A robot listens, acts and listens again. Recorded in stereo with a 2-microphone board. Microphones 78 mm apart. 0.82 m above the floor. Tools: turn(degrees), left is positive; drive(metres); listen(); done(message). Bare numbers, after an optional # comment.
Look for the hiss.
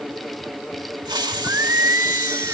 # The hiss: about 65° right or 115° right.
turn(-65)
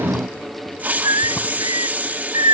# So it is at 25° right.
turn(-25)
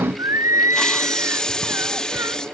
# The hiss is now 10° left.
turn(10)
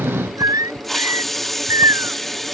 done("Facing the hiss.")